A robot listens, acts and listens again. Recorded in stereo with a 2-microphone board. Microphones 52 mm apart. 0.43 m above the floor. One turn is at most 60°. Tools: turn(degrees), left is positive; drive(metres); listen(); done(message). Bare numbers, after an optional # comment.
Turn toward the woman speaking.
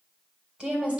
# The woman speaking: about 20° right or 160° right.
turn(-20)
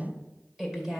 turn(-30)
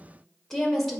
done("Found it: a woman speaking, straight ahead.")